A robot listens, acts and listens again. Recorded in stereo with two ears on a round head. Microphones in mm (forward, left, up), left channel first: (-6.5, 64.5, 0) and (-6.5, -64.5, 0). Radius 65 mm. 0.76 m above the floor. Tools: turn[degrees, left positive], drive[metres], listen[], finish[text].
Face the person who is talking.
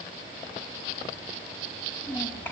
Action: turn[30]
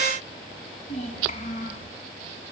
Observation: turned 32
Thought: So it is at 125° left.
Action: turn[125]
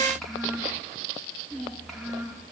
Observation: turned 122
Action: finish[Found it: a child speaking, straight ahead.]